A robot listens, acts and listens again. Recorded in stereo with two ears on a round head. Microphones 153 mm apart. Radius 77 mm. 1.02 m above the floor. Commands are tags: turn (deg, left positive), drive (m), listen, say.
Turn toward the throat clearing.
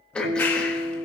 <turn deg="30"/>
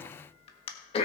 <turn deg="145"/>
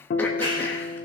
<listen/>
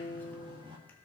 <listen/>
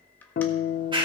<say>I heard throat clearing from this way, but can't make it out now.</say>